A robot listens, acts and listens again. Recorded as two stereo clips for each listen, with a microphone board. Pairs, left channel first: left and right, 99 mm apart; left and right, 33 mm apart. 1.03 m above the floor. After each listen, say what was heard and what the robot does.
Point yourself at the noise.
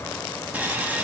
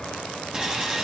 The sawing: about 15° right or 165° right. Turn 15° right.
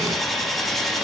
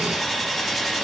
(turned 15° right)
Found it: sawing, straight ahead, under 1 m away.